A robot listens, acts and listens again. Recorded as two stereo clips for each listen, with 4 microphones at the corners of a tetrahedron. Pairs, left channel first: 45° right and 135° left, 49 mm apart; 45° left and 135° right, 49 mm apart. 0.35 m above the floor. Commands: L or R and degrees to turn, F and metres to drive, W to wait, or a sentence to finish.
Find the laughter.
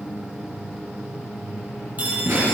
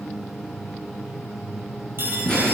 L115
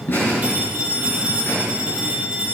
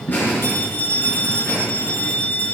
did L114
Found it: laughter, straight ahead, over 4 m away.